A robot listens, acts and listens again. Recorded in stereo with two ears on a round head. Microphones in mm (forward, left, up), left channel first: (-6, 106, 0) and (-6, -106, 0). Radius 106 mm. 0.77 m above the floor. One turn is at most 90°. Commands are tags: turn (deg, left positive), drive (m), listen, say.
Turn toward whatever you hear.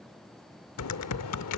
<turn deg="75"/>
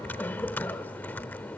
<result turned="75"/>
<turn deg="10"/>
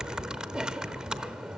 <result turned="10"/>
<say>Facing the typing on a keyboard, under 1 m away.</say>